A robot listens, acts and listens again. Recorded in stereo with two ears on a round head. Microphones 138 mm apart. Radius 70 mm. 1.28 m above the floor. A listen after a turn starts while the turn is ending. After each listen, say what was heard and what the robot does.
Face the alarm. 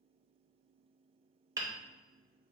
Keep listening.
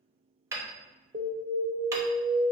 The alarm: about 50° right or 130° right. Turn 50° right.
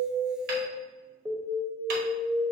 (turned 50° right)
Facing the alarm, 1 to 2 m away.